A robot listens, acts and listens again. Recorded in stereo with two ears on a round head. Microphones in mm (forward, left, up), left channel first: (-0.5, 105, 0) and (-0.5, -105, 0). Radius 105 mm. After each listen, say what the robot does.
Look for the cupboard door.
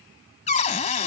Turn 30° left.
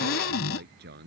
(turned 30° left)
Turn 120° left.
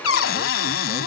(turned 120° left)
Turn 60° left.
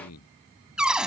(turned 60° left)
Facing the cupboard door.